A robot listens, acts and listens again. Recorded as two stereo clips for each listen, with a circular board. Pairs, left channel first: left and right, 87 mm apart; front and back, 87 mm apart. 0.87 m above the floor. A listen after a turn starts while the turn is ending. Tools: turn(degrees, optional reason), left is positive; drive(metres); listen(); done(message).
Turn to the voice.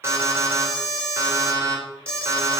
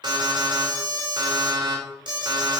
listen()
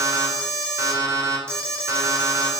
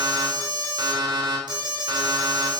listen()
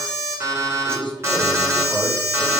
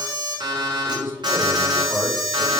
turn(degrees=-110, reason="The man speaking: 110° right.")
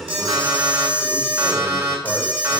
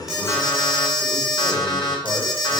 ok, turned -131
turn(degrees=20, reason="Nothing new. It was at 20° left.")
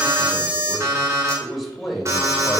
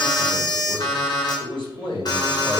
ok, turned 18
done("Found it: a man speaking, straight ahead.")